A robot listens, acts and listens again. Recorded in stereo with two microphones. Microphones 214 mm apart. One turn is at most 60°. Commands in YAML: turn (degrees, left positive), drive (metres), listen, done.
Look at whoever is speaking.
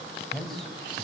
turn: 30
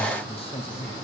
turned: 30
turn: 60
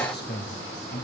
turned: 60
turn: 60
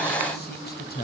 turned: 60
turn: 60
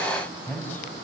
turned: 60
turn: 10
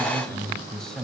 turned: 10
done: "Found it: a man speaking, straight ahead, 2 to 4 m away."